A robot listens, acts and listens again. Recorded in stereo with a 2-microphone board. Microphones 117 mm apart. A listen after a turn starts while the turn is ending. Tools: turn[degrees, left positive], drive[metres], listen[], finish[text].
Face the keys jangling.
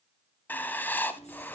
Thought: The keys jangling: about 70° left or 110° left.
Action: turn[70]
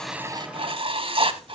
Action: listen[]
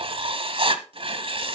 Action: listen[]
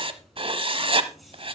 Action: finish[Found it: keys jangling, straight ahead, over 4 m away.]